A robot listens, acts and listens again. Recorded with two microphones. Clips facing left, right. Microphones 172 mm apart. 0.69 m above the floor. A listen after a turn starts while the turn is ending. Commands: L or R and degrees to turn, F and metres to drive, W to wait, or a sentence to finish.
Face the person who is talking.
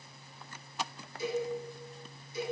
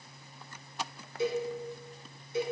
W
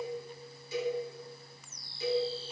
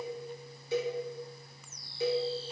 W
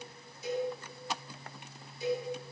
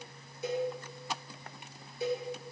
I can't make out anyone speaking, only a cowbell.